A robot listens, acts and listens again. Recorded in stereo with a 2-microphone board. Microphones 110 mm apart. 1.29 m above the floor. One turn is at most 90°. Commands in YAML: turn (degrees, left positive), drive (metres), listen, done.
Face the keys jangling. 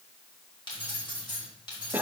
turn: 45
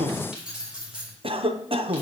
turn: -10
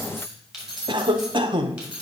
turn: -10
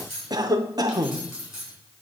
done: "Found it: keys jangling, straight ahead, 2 to 4 m away."